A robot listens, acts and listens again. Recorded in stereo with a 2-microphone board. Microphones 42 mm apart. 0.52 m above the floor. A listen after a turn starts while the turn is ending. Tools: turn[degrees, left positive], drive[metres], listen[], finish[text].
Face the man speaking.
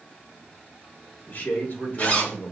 Thought: The man speaking: about 40° left or 140° left.
Action: turn[40]
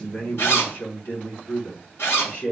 Thought: So it is at 125° left.
Action: turn[125]
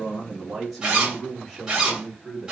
Thought: The man speaking is now 10° left.
Action: turn[10]
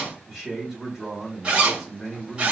Action: finish[Found it: a man speaking, straight ahead.]